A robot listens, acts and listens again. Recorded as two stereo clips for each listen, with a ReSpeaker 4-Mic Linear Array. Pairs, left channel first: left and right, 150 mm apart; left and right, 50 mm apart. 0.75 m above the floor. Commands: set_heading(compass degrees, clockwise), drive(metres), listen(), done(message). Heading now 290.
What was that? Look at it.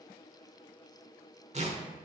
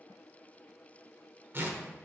set_heading(335)
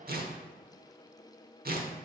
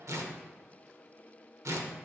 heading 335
set_heading(65)
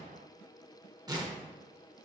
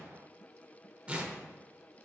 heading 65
set_heading(90)
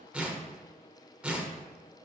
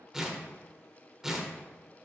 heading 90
set_heading(100)
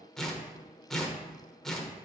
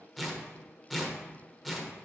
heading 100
done("Facing the tearing paper.")